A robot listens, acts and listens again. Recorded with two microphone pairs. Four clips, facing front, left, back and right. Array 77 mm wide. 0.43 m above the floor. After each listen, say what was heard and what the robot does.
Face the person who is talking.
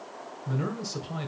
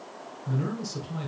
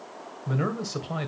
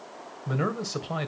The man speaking: 120° right. Turn 120° right.
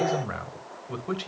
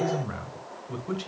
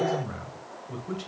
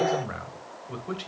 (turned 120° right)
The man speaking is now 15° right. Turn 15° right.
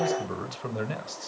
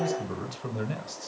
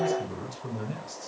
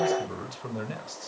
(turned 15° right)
Found it: a man speaking, straight ahead.